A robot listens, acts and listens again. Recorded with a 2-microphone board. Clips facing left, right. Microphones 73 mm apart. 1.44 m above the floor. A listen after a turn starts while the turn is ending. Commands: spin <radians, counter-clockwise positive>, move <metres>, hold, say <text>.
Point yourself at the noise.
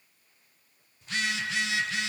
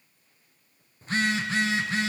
spin -0.61
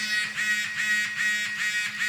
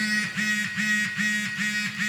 say Found it: a phone buzzing, straight ahead.